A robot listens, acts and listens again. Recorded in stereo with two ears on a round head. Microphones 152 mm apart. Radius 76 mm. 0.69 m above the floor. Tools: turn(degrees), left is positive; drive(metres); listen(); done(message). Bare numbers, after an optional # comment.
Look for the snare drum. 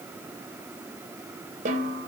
# The snare drum: about 50° right or 130° right.
turn(-50)
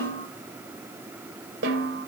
# So it is at 80° right.
turn(-80)
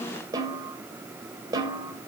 # The snare drum is now 25° right.
turn(-25)
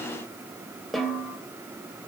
done("Found it: a snare drum, straight ahead, 2 to 4 m away.")